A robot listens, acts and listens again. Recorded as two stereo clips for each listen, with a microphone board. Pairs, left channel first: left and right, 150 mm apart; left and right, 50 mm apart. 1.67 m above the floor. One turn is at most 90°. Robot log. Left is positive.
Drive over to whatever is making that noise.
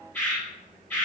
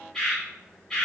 note: The bird: about 15° left or 165° left.
cmd yaw +15
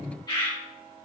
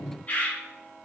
note: So it is at 150° left.
cmd yaw +90
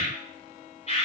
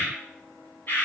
note: The bird is now 50° left.
cmd yaw +50
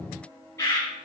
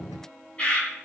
note: The bird is now 20° left.
cmd yaw +20
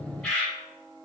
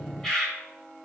cmd fwd 1.0
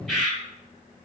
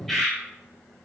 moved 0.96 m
cmd fwd 1.0
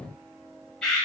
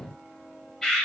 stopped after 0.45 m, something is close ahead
end: I am next to the bird.